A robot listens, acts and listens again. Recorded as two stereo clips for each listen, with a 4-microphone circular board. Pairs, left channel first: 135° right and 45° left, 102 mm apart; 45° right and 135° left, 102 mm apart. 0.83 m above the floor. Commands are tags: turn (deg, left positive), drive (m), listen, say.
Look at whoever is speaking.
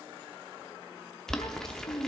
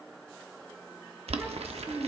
<turn deg="-160"/>
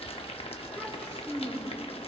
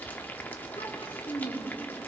<turn deg="-55"/>
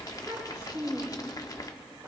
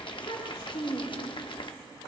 <turn deg="-20"/>
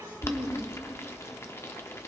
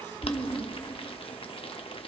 <turn deg="-10"/>
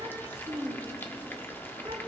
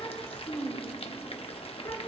<say>Facing the child speaking, 2 to 4 m away.</say>